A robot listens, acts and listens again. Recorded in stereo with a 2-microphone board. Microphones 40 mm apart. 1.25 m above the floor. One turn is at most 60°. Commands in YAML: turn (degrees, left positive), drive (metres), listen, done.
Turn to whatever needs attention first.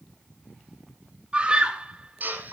turn: -25
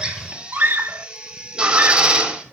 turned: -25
turn: -60
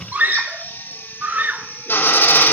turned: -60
turn: -50
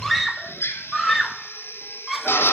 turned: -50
done: "Found it: a scream, straight ahead."